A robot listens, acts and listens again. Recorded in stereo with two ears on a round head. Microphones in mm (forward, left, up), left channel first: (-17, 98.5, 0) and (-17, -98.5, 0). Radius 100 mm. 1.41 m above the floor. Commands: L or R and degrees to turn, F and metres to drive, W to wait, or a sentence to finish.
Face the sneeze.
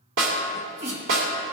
R55
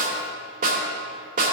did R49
W
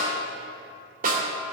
I heard a sneeze, but can't make it out now. It was about 5° right or 75° right.